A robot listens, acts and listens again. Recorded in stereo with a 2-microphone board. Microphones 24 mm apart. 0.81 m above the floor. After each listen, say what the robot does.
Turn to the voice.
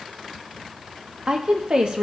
Turn 40° right.
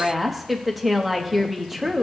Turn 10° right.
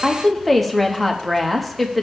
Found it: a woman speaking, straight ahead, 1 to 2 m away.